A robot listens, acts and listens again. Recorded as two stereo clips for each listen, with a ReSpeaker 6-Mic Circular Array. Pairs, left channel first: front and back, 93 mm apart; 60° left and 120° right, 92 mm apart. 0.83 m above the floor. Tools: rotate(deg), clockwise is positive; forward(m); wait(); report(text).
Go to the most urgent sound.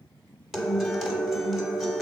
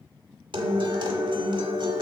wait()
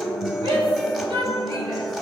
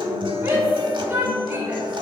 rotate(-175)
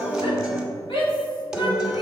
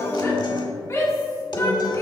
forward(1.0)
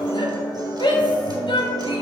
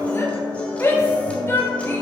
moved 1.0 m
forward(1.0)
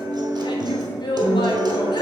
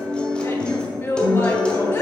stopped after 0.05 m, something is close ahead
report("I am next to the shout.")